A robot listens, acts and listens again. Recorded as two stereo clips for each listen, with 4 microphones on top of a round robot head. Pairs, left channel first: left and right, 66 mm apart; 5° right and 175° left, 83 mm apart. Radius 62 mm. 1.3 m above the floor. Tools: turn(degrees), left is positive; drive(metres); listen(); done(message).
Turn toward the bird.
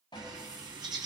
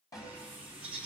turn(degrees=-105)
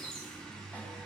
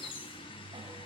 turn(degrees=10)
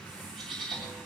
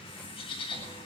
done("Found it: a bird, straight ahead.")